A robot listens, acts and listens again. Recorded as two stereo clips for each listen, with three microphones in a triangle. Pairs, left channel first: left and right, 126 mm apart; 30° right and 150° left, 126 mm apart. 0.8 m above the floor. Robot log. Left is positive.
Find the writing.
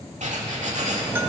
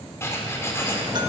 note: The writing: 100° right.
cmd yaw -100
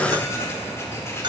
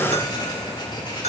note: The writing is now 20° left.
cmd yaw +20
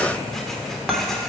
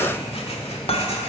end: Facing the writing, 1 to 2 m away.